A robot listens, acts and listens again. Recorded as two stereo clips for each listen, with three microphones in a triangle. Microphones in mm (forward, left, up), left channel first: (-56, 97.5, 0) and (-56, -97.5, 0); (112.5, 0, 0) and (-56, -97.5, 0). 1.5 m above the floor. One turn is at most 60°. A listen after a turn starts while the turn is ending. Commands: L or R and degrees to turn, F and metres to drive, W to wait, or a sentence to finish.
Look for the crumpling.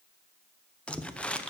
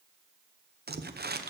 L60
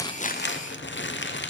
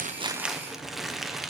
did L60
L60
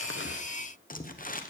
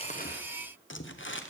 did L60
L45
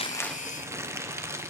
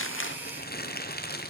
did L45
R15
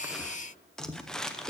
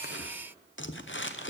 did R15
Facing the crumpling.